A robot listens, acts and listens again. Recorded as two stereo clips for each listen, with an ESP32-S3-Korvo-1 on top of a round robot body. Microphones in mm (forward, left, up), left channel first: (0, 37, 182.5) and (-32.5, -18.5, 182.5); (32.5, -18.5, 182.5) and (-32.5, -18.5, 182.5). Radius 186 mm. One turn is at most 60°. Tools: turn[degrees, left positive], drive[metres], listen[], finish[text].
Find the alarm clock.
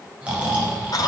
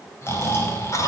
Action: listen[]
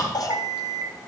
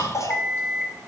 Thought: The alarm clock: 90° right.
Action: turn[-60]
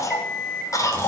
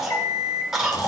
Thought: The alarm clock is now 30° right.
Action: turn[-30]
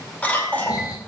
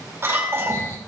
Action: listen[]
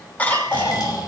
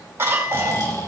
Action: listen[]
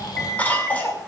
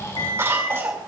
Action: finish[Found it: an alarm clock, straight ahead.]